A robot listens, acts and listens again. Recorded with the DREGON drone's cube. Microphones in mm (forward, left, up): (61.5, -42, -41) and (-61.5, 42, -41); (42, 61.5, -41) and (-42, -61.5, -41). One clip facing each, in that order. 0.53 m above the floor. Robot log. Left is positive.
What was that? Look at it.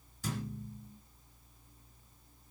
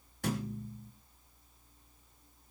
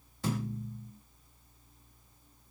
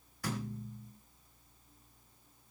note: The thud: 120° left.
cmd yaw +120
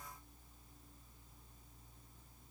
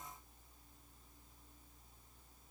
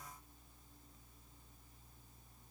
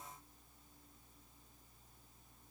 end: Facing where the thud came from. I can't hear it now.